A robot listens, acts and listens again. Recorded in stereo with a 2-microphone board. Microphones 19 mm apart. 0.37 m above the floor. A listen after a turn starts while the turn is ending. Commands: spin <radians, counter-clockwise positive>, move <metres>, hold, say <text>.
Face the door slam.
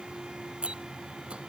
spin -1.13
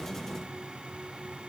hold
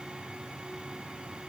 say I heard a door slam, but can't make it out now. It was about straight ahead or 50° right.